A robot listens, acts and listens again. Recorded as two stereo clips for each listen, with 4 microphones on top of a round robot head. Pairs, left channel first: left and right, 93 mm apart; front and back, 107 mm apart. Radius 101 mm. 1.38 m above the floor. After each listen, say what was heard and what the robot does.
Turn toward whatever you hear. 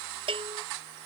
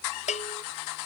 The bell: 40° right. Turn 40° right.
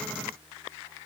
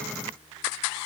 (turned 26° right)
Nothing new. It was at 15° right. Turn 15° right.
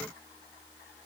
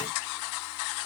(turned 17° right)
Keep listening.
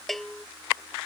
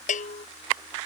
Found it: a bell, straight ahead.